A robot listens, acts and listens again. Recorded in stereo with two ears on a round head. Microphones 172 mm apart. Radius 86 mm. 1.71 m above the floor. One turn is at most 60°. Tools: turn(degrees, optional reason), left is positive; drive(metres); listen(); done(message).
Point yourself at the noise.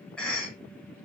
turn(degrees=30)
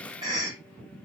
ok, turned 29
turn(degrees=-25, reason="So it is at 25° right.")
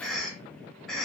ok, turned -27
done("Facing the cough.")